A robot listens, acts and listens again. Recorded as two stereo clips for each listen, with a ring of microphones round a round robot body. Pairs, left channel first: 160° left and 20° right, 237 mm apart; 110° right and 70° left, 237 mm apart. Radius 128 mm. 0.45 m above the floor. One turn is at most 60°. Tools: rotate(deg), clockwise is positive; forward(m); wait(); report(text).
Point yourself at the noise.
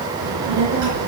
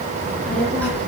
rotate(25)
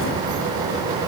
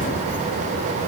rotate(15)
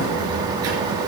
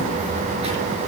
report("Found it: a child speaking, straight ahead, over 4 m away.")